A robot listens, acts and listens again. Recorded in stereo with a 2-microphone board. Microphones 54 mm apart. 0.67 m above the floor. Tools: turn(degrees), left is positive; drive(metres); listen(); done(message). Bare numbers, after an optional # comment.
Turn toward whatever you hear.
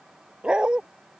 # The dog barking: about 15° right or 165° right.
turn(-15)
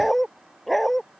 turn(30)
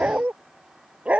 # So it is at 20° right.
turn(-20)
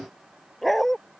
done("Facing the dog barking.")